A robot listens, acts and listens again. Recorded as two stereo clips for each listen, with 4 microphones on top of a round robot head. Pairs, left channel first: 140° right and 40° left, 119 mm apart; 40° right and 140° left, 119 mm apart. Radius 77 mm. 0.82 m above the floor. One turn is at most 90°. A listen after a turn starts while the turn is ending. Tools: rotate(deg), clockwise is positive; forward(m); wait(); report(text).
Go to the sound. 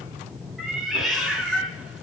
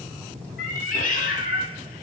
rotate(50)
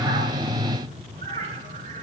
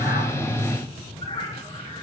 rotate(-15)
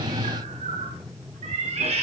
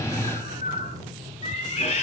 forward(1.0)
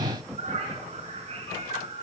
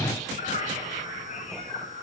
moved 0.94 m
forward(1.0)
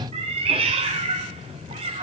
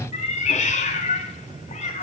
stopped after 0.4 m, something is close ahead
report("Blocked. The cat meowing is further on, straight ahead.")